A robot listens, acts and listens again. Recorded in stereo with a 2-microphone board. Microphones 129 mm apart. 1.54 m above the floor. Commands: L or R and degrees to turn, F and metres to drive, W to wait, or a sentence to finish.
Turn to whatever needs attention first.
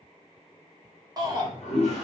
R30
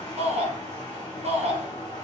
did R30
R110
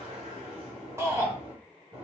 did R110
R25
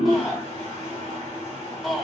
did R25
Found it: a shout, straight ahead, under 1 m away.